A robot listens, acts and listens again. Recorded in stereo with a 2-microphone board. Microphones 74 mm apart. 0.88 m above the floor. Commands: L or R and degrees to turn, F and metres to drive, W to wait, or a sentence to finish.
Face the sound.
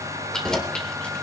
L30
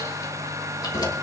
L120
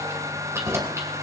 R40
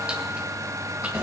R15
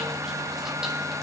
W
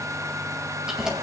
Facing the keys jangling, 2 to 4 m away.